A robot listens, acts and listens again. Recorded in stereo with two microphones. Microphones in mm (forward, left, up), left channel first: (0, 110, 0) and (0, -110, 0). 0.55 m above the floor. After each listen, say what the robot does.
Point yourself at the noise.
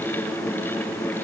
Keep listening.
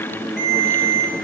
Turn 50° left.
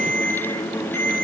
Turn 80° left.
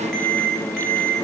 Found it: a ringtone, straight ahead.